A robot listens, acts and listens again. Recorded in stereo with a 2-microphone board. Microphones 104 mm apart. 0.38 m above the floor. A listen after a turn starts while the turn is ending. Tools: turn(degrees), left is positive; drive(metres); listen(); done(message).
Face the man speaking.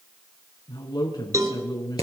turn(degrees=40)
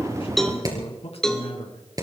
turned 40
turn(degrees=100)
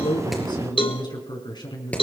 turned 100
turn(degrees=45)
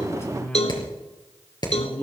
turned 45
turn(degrees=15)
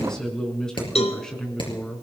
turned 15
done("Found it: a man speaking, straight ahead.")